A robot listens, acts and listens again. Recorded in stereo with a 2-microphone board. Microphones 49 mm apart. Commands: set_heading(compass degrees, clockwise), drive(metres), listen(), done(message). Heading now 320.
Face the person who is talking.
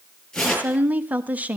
set_heading(350)
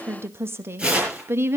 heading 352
set_heading(102)
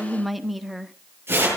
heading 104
done("Facing the woman speaking.")